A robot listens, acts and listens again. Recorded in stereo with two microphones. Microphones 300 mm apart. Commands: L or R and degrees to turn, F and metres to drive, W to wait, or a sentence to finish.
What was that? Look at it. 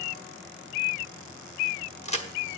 L20
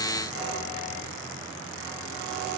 W
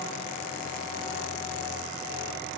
I heard a crack, but can't make it out now. It was about straight ahead or 140° left.